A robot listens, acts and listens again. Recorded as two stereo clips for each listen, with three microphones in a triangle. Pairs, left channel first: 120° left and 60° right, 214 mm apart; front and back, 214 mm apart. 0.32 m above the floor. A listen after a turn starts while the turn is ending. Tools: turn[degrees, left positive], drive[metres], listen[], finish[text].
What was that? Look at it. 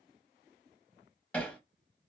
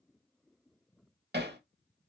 Thought: The hammering: 160° right.
Action: turn[-160]
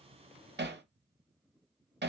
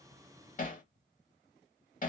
Thought: The hammering is now 45° right.
Action: turn[-45]
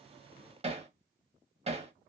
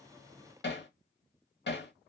Action: finish[Found it: hammering, straight ahead, under 1 m away.]